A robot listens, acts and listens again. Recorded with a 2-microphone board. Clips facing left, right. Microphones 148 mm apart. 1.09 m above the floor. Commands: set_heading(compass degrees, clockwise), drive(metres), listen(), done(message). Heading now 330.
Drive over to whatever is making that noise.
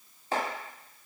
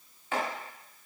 set_heading(290)
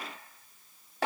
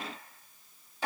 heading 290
set_heading(190)
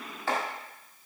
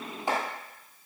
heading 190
set_heading(210)
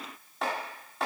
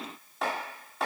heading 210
drive(1.0)
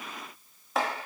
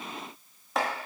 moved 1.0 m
drive(1.0)
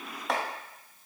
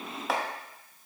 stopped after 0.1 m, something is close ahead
done("I am next to the chopping.")